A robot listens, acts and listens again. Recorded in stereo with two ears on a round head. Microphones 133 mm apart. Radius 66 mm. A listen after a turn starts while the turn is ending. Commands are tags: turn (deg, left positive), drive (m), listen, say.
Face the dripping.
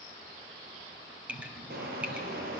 <turn deg="-30"/>
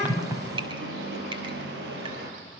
<turn deg="-145"/>
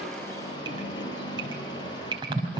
<turn deg="-35"/>
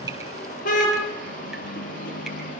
<listen/>
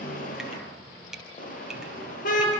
<say>Facing the dripping, over 4 m away.</say>